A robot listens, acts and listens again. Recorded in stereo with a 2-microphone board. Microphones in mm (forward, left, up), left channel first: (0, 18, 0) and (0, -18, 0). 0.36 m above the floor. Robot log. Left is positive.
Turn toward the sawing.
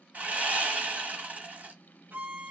note: The sawing: about 45° right or 135° right.
cmd yaw -45
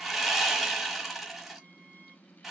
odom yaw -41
end: Facing the sawing, 1 to 2 m away.